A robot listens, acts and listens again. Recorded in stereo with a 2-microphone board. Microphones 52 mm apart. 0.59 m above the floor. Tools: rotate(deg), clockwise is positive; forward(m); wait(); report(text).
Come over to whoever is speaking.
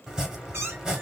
wait()
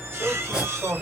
rotate(65)
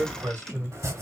rotate(40)
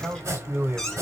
rotate(35)
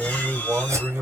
rotate(20)
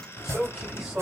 forward(1.0)
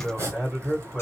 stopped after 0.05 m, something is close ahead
report("Blocked. The man speaking is further on, straight ahead.")